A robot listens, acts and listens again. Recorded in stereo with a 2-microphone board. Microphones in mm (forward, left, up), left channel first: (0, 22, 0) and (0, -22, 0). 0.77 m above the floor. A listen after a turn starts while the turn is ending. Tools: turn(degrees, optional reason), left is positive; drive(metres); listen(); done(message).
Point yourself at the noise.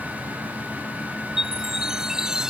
turn(degrees=-30)
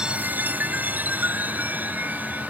turn(degrees=-140, reason="So it is at 140° right.")
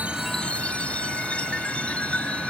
turn(degrees=25, reason="The chime is now 25° left.")
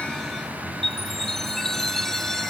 turn(degrees=10, reason="The chime is now 10° left.")
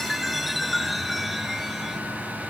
done("Facing the chime.")